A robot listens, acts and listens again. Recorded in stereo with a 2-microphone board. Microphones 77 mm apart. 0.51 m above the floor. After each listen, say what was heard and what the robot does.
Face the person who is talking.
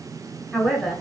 Turn 30° left.
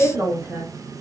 So it is at 35° right. Turn 35° right.
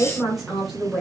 Facing the man speaking, 1 to 2 m away.